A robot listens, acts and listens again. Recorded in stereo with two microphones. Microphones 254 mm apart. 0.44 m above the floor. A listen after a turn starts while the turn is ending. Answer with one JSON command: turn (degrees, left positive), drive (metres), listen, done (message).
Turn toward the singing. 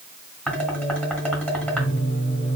{"turn": 45}
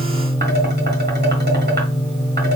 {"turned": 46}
{"done": "Found it: singing, straight ahead, 2 to 4 m away."}